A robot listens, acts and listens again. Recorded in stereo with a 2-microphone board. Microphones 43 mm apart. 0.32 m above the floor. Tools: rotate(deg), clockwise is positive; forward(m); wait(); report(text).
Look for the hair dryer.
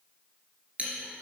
wait()
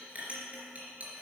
wait()
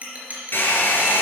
rotate(-50)
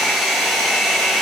report("Found it: a hair dryer, straight ahead.")